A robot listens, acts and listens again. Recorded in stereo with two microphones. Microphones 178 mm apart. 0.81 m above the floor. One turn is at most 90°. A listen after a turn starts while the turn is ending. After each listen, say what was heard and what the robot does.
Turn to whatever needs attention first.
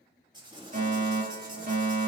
The fire alarm: about 55° right or 125° right. Turn 55° right.
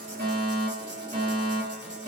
So it is at 60° right. Turn 60° right.
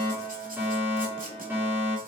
The fire alarm is now 15° right. Turn 15° right.
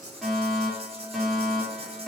Found it: a fire alarm, straight ahead.